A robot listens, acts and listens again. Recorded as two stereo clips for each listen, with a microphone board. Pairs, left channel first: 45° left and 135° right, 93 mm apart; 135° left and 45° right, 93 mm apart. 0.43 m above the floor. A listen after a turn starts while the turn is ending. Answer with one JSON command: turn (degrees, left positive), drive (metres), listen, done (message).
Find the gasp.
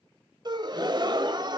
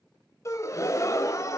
{"turn": -170}
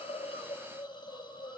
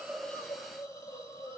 {"done": "I heard a gasp from this way, but can't make it out now."}